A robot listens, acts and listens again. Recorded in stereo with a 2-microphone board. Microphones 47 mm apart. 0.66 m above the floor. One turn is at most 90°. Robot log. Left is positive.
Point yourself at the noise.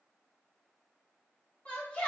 note: The shout: about 30° left or 150° left.
cmd yaw +30
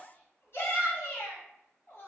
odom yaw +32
note: So it is at 120° left.
cmd yaw +90
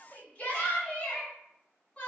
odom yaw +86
note: The shout is now 30° left.
cmd yaw +30
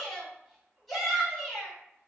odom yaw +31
end: Facing the shout.